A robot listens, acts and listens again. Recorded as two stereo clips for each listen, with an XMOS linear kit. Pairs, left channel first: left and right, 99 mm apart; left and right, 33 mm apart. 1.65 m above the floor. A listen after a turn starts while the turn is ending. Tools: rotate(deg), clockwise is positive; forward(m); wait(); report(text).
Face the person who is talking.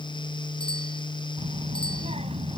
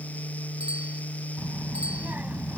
rotate(90)
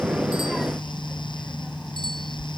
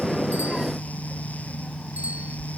report("Facing the child speaking.")